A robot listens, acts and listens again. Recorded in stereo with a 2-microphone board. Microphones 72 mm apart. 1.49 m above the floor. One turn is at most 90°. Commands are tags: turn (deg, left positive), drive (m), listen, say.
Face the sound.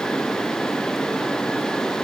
<listen/>
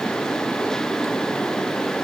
<listen/>
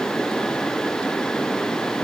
<say>I can't make out anything.</say>